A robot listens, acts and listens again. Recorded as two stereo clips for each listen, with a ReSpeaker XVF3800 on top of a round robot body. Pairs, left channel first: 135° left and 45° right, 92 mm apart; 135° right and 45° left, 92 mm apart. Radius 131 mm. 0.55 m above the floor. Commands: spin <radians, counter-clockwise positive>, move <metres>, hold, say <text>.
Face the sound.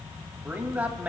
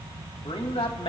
spin -2.09
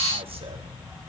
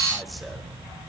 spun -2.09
hold
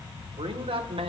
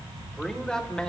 spin -0.96
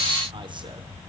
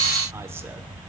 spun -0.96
hold
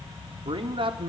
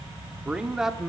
spin -0.79
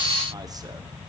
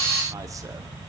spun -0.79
hold
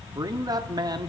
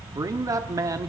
say Facing the man speaking.